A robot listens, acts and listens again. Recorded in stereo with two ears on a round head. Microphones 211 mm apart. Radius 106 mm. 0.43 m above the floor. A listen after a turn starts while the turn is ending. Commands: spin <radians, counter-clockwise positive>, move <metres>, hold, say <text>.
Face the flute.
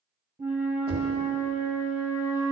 spin -0.52
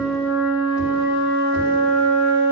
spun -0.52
spin 0.35
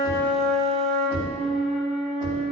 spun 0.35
say Facing the flute.